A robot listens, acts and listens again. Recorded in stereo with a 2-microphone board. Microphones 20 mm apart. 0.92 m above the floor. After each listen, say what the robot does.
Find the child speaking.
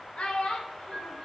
Turn 60° left.
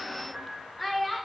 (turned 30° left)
Facing the child speaking, 1 to 2 m away.